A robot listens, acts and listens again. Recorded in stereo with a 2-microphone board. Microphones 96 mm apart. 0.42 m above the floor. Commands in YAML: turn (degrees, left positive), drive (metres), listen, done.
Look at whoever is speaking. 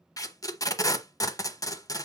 listen: true
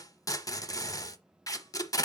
listen: true
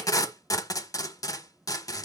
done: "I can't make out anyone speaking to turn to."